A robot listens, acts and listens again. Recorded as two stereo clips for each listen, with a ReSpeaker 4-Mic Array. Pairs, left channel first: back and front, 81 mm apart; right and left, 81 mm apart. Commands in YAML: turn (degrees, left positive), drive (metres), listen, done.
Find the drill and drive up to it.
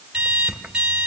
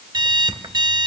listen: true
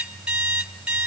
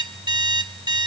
listen: true
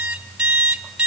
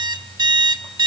done: "I can't make out a drill, only an alarm clock."